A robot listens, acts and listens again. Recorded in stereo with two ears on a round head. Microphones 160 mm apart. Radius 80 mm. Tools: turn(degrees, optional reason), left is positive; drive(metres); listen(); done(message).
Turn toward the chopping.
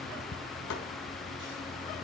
listen()
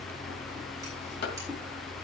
turn(degrees=65, reason="The chopping: about 65° left or 115° left.")
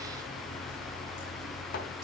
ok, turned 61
listen()
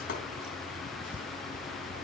listen()
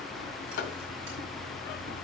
turn(degrees=50, reason="So it is at 50° left.")
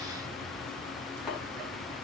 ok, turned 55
listen()
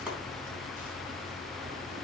listen()
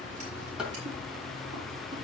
done("Found it: chopping, straight ahead.")